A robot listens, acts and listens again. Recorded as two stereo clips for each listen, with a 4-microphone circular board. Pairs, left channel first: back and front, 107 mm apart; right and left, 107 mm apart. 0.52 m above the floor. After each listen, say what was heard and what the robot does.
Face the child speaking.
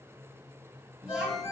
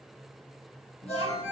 The child speaking: 80° right. Turn 80° right.
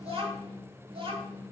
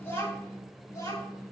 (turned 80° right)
The child speaking is now 35° right. Turn 35° right.
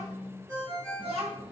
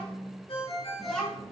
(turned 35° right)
The child speaking is now 10° right. Turn 10° right.
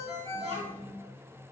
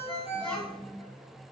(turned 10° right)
The child speaking is now 10° right. Turn 10° right.
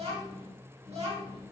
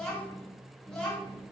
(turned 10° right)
Facing the child speaking, 2 to 4 m away.